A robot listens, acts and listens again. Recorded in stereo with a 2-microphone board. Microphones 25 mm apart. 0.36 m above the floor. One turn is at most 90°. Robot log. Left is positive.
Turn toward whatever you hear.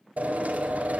cmd yaw -90
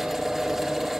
note: So it is at 10° right.
cmd yaw -10
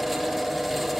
end: Found it: a drill, straight ahead.